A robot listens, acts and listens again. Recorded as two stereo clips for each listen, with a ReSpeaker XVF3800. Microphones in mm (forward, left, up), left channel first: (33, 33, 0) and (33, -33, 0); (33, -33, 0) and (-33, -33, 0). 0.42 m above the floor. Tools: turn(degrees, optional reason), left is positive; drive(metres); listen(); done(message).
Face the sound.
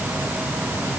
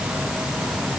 listen()
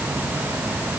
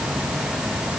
listen()
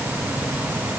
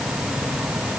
done("I can't make out anything.")